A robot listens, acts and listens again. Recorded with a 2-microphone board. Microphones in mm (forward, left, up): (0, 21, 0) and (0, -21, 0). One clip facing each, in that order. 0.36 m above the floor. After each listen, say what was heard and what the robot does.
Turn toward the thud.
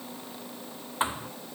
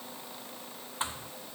The thud: about 20° left or 160° left. Turn 20° left.
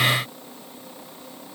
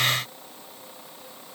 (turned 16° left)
Keep listening.
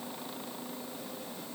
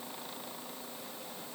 I heard a thud, but can't make it out now. It was about 5° left or 140° left.